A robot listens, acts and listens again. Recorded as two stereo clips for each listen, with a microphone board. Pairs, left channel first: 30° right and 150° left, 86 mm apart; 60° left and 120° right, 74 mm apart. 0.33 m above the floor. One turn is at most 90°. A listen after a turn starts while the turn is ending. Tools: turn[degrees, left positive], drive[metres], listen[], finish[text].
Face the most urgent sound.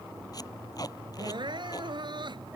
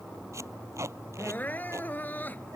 Thought: The crying: 125° left.
Action: turn[90]
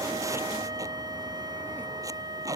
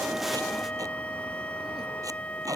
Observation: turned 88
Thought: Nothing new. It was at 35° left.
Action: turn[35]
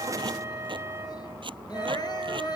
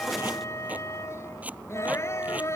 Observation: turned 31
Action: listen[]
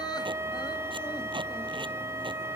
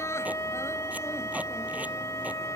Action: finish[I heard crying from this way, but can't make it out now.]